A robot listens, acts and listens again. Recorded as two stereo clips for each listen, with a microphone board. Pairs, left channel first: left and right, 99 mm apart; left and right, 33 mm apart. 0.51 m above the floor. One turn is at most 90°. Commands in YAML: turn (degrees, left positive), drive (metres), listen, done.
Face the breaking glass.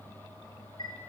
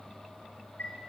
listen: true
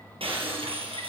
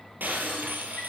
turn: -75
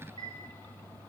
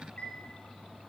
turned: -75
listen: true
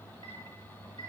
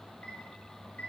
done: "I heard breaking glass, but can't make it out now. It was about straight ahead or 30° right."